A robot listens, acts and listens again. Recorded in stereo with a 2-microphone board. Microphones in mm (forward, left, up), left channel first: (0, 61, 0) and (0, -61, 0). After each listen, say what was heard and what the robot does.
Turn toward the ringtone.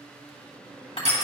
Keep listening.
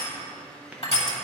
Keep listening.
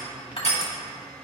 I can't make out a ringtone, only crushing.